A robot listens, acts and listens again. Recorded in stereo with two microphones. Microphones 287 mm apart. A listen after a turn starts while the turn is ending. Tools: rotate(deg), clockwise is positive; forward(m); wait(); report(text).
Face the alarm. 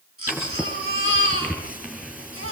wait()
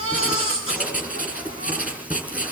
wait()
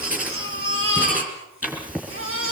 report("I can't make out an alarm to turn to.")